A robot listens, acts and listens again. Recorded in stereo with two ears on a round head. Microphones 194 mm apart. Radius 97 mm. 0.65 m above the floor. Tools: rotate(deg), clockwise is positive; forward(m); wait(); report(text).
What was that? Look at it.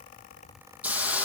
rotate(30)
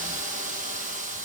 rotate(145)
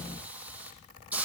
report("Facing the hiss.")